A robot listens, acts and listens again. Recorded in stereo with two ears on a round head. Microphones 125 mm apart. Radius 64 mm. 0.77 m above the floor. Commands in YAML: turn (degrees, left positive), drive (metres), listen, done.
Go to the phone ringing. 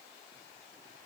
listen: true
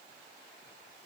listen: true
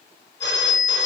turn: 30
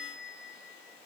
drive: 1.0
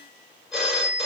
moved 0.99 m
drive: 1.0
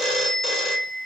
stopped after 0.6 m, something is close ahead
done: "Arrived at the phone ringing, straight ahead."